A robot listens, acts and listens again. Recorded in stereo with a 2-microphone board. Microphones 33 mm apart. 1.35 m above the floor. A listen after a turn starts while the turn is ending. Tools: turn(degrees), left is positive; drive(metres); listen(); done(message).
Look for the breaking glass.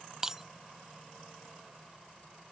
turn(degrees=-30)
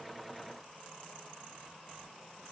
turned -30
listen()
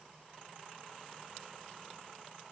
done("I heard breaking glass, but can't make it out now. It was about 15° left or 135° right.")